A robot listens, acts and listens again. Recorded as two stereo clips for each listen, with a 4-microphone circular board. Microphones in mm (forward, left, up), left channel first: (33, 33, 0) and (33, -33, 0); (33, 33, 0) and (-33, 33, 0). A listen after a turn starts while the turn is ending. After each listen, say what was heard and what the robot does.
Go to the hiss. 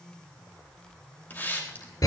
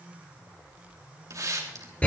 The hiss: 150° left. Turn 150° left.
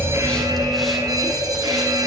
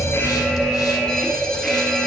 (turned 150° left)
Keep listening.
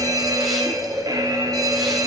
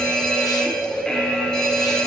Keep listening.
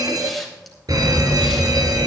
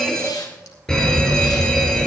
Facing where the hiss came from. I can't hear it now. I did not reach it.